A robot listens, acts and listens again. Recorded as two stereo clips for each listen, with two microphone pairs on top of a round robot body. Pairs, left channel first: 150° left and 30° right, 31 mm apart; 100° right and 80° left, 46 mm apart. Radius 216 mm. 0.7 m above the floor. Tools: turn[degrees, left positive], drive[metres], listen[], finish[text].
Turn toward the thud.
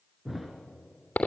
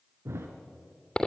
Thought: The thud: 55° left.
Action: turn[55]
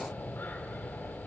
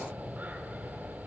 Action: finish[I heard a thud from this way, but can't make it out now.]